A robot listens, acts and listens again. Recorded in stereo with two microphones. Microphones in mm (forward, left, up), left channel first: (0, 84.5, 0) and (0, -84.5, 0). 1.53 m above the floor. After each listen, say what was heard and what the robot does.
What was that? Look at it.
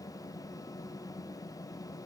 Keep listening.
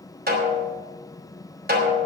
The snare drum: about 70° right or 110° right. Turn 70° right.
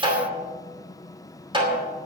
So it is at 30° right. Turn 30° right.
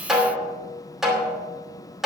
Found it: a snare drum, straight ahead, 2 to 4 m away.